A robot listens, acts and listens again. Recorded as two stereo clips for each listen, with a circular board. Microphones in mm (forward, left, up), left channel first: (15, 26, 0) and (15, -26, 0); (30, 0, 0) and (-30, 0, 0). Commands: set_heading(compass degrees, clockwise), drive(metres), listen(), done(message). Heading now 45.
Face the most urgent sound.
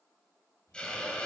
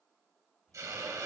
listen()
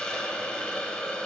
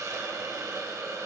listen()
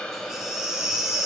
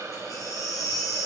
set_heading(55)
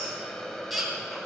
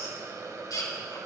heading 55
done("Facing the baby crying, 2 to 4 m away.")